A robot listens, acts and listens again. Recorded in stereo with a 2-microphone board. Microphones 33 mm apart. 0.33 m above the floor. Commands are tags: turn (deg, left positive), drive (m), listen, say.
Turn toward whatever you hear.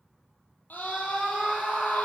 <turn deg="65"/>
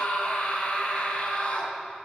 <turn deg="45"/>
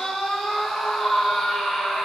<say>Facing the scream.</say>